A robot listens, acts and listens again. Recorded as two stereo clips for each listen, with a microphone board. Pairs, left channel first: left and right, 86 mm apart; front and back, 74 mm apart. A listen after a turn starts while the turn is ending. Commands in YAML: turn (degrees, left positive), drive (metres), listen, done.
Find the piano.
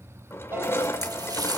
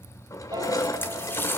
turn: -155
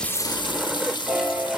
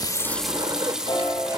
done: "Facing the piano."